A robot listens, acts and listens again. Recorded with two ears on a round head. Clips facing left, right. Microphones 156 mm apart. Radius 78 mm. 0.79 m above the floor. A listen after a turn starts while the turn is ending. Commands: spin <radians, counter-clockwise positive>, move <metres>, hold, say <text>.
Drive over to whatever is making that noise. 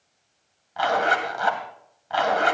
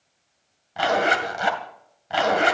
spin -0.52
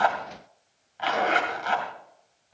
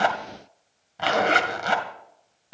spin -2.09
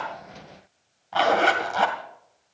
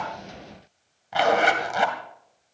spin -0.26
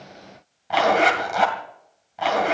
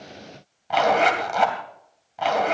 move 1.0
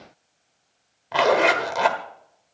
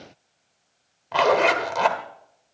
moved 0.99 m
move 1.0
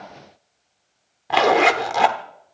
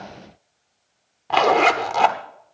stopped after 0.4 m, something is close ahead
say Arrived at the zipper, straight ahead.